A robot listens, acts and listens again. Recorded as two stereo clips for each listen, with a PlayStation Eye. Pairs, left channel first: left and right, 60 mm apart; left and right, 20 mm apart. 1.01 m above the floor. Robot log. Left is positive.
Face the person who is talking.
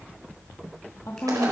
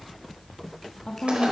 note: The woman speaking: about 50° left or 130° left.
cmd yaw +50
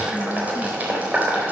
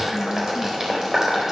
cmd idle
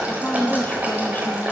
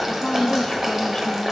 note: So it is at 30° left.
cmd yaw +30
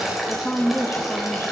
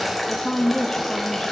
note: The woman speaking is now 30° left.
cmd yaw +30
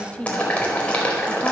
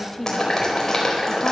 note: The woman speaking is now 20° left.
cmd yaw +20
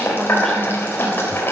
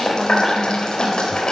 cmd idle
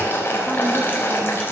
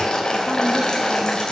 cmd idle
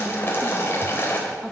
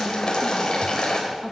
end: Facing where the woman speaking came from. I can't hear it now.